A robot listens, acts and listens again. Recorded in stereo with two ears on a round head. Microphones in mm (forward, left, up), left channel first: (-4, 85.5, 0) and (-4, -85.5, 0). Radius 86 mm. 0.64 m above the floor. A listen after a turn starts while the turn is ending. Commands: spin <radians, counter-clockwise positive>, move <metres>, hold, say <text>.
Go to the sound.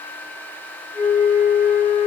spin -0.26
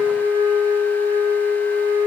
spin -2.62
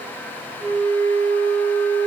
spin 0.35
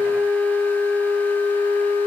move 1.0
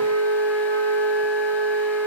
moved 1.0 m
move 1.0
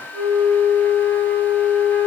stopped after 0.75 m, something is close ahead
spin 0.26
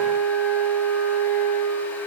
say Arrived at the flute, straight ahead.